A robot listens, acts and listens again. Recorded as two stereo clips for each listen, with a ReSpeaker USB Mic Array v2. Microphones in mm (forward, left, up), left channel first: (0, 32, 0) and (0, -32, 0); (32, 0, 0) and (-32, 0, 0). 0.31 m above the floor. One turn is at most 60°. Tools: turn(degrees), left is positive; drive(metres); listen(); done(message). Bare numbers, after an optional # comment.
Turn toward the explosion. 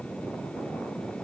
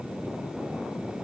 listen()
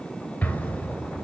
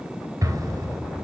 # The explosion: 155° left.
turn(60)
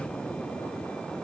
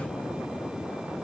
# Nothing new. It was at 95° left.
turn(60)
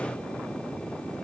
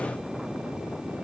# Nothing new. It was at 35° left.
turn(35)
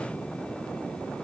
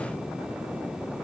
done("I heard an explosion from this way, but can't make it out now.")